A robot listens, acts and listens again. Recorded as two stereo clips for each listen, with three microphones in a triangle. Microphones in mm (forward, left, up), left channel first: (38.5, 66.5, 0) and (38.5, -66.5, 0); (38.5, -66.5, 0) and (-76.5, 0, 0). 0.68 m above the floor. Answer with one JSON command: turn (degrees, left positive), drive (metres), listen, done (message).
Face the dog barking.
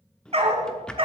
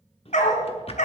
{"turn": -45}
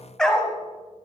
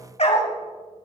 {"turn": 10}
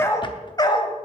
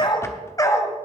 {"turn": 35}
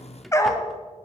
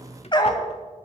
{"turn": 25}
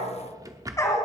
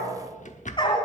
{"turn": 25}
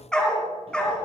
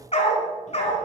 {"done": "Found it: a dog barking, straight ahead, 1 to 2 m away."}